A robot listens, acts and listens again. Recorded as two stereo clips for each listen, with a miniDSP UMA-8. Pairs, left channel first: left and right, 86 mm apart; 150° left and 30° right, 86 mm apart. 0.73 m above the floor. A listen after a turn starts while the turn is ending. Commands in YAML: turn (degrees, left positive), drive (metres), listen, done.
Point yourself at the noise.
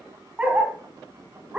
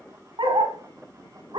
turn: -15
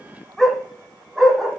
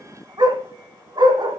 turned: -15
done: "Found it: a dog barking, straight ahead, 1 to 2 m away."